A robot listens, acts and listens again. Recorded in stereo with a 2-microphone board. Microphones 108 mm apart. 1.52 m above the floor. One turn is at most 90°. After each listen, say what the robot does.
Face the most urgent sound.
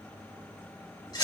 Keep listening.
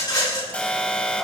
Turn 30° left.
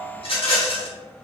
Turn 15° right.
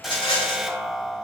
Facing the alarm, 1 to 2 m away.